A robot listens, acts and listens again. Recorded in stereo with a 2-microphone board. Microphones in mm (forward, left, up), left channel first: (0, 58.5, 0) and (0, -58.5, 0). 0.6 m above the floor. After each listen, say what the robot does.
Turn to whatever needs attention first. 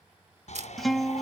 Turn 90° left.
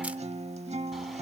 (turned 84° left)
Keep listening.
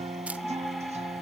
Found it: a shout, straight ahead.